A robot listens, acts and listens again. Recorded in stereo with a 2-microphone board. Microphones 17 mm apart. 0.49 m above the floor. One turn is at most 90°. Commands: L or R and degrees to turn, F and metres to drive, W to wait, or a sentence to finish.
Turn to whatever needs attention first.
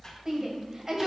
R25
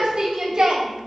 R90
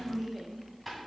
R35
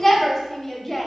L20
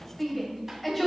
Facing the shout.